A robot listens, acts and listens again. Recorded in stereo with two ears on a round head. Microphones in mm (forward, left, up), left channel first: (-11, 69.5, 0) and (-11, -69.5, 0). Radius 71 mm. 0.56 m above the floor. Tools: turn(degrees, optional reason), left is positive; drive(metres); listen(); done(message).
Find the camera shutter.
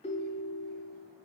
listen()
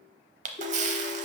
turn(degrees=-50, reason="The camera shutter: about 50° right or 130° right.")
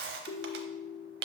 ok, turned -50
turn(degrees=-80, reason="So it is at 80° right.")
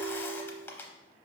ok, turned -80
turn(degrees=15, reason="The camera shutter is now 15° left.")
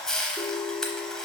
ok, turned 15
done("Found it: a camera shutter, straight ahead.")